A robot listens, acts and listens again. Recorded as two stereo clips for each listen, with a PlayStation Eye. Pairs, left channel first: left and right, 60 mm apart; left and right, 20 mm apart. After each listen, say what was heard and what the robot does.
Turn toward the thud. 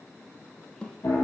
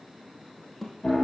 The thud: about 15° left or 165° left. Turn 15° left.
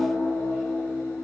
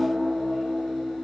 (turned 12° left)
Keep listening.
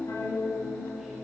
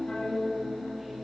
I heard a thud, but can't make it out now. It was about 5° left or 155° left.